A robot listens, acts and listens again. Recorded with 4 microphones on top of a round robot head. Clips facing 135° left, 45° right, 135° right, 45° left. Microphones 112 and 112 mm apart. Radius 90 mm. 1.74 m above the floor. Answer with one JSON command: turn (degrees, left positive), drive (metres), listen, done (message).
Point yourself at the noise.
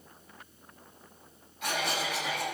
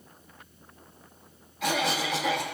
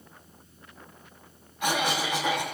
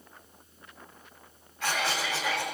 {"turn": -60}
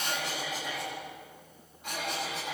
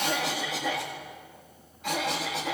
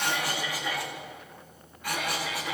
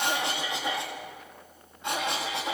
{"turn": -25}
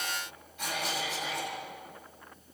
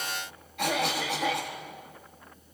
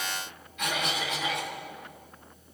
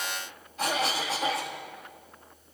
{"turn": -15}
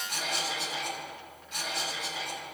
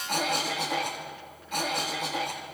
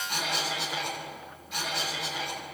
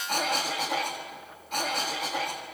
{"done": "Found it: a cough, straight ahead."}